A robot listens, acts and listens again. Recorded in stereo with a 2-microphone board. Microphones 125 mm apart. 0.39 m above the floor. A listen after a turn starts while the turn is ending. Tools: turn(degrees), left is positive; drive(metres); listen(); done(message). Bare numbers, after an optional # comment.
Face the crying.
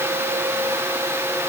listen()
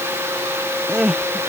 turn(-30)
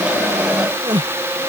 # So it is at 145° right.
turn(-145)
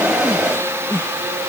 # The crying is now 20° left.
turn(20)
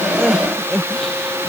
done("Facing the crying.")